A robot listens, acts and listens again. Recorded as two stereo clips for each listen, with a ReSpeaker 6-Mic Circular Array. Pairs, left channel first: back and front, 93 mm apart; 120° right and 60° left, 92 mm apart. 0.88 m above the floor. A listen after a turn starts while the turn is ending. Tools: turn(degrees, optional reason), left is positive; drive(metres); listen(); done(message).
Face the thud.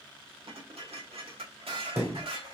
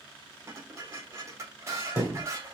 turn(degrees=-65, reason="The thud: 65° right.")
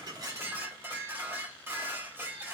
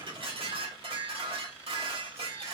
done("I heard a thud from this way, but can't make it out now.")